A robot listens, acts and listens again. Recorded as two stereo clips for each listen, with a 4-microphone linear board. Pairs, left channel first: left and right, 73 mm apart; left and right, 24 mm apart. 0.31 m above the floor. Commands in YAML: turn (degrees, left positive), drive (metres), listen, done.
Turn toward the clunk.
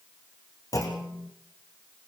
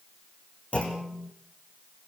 turn: 50
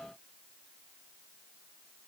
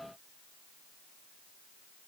listen: true
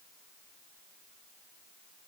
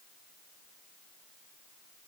done: "I heard a clunk, but can't make it out now. It was about straight ahead or 80° left."